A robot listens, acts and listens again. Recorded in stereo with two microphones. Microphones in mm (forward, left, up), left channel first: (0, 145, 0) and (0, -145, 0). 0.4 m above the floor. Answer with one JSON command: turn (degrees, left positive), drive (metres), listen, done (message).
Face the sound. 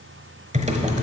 {"turn": -25}
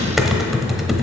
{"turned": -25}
{"done": "Facing the typing on a keyboard, 1 to 2 m away."}